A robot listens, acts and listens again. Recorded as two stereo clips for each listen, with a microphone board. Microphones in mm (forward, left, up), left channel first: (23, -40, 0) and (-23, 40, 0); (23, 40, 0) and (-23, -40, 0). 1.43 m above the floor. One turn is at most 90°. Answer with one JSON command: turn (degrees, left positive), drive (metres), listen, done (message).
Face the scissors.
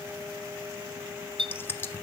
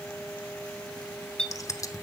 {"done": "Found it: scissors, straight ahead."}